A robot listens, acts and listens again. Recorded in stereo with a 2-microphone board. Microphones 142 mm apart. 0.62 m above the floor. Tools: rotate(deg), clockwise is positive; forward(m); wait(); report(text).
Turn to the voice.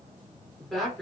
rotate(-30)
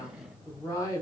rotate(-150)
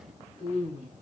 rotate(-55)
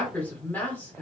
rotate(-15)
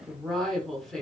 report("Facing the woman speaking, 1 to 2 m away.")